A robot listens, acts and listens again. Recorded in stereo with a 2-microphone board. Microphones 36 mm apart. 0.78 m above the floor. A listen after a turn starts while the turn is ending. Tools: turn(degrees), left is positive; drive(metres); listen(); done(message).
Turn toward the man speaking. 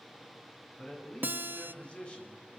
turn(degrees=30)
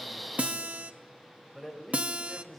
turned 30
done("Found it: a man speaking, straight ahead.")